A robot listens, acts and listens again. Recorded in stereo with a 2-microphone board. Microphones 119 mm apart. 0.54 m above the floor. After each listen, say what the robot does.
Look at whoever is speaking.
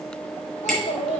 Turn 90° left.
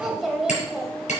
Found it: a child speaking, straight ahead.